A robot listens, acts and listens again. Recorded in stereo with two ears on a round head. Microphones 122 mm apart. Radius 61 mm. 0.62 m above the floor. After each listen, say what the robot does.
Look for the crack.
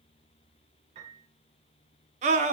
Keep listening.
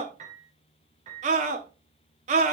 Keep listening.
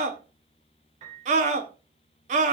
I can't make out a crack to turn to.